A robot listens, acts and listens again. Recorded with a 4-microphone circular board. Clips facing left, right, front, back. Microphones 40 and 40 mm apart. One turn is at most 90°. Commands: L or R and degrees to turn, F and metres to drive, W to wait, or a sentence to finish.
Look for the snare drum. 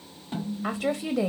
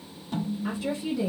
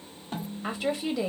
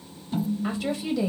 L35
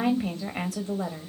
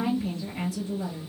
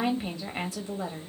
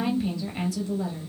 W
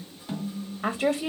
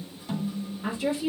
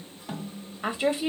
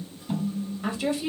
L20
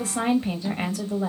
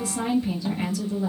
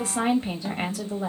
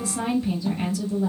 W
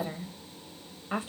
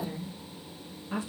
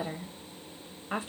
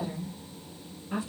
W
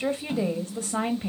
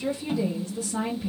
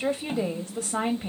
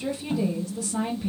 Found it: a snare drum, straight ahead, 2 to 4 m away.